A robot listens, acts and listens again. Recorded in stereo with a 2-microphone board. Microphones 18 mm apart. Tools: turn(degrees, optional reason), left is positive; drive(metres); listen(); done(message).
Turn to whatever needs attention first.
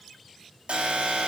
turn(degrees=-90)
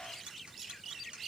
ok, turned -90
listen()
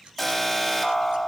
done("Found it: an alarm, straight ahead, over 4 m away.")